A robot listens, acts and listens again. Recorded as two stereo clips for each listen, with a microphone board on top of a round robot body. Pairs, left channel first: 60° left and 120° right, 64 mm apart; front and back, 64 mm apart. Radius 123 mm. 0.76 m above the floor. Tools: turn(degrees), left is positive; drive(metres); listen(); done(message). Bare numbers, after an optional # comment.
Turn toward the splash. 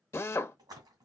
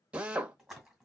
# The splash: 90° right.
turn(-90)
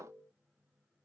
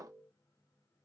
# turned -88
done("Facing where the splash came from. I can't hear it now.")